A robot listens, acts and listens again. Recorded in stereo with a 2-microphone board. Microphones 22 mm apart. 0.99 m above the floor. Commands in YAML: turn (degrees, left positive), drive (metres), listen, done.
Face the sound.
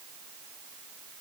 listen: true
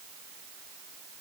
listen: true
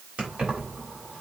turn: -65
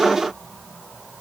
listen: true
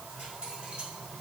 listen: true
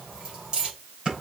turn: -50
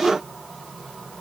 listen: true
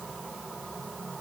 listen: true
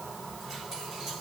turn: -15
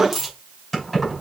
done: "Facing the keys jangling."